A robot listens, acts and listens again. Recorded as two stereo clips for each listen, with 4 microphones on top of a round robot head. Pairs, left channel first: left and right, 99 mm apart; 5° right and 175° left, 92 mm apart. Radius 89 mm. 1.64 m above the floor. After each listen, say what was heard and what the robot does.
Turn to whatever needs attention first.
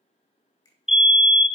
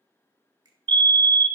The fire alarm: 170° right. Turn 170° right.
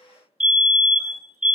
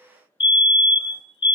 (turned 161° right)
The fire alarm is now 15° right. Turn 15° right.
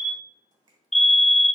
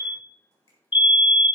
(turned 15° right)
Facing the fire alarm, under 1 m away.